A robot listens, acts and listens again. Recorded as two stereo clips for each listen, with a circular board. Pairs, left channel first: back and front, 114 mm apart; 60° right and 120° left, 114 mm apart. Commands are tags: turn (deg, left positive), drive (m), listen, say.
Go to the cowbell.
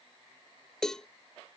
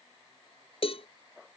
<turn deg="-95"/>
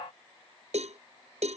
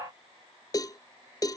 <drive m="1.0"/>
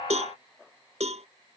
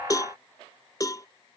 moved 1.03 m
<drive m="1.0"/>
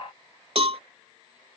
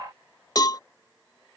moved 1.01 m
<turn deg="-10"/>
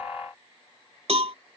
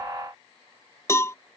<drive m="1.0"/>
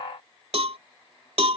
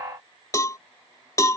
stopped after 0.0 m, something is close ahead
<say>Arrived at the cowbell, straight ahead.</say>